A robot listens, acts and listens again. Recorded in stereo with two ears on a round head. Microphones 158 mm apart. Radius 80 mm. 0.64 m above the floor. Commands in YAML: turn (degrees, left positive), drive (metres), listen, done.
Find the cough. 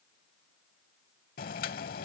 listen: true
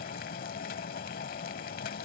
listen: true
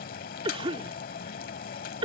turn: -30
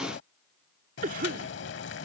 turn: -110
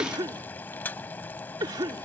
turn: -30
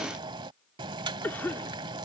turn: 15
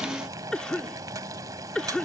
done: "Found it: a cough, straight ahead."